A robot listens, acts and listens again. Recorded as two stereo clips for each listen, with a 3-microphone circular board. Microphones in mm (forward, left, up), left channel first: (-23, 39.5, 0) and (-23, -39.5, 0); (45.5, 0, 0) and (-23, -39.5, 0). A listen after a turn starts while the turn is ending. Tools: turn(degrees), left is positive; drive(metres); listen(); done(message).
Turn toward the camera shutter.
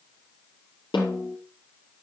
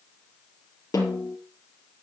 listen()
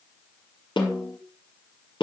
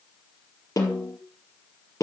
listen()
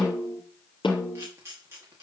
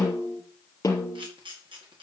turn(degrees=-145)
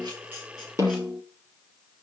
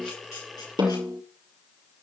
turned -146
listen()
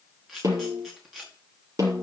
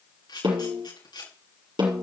done("Found it: a camera shutter, straight ahead, over 4 m away.")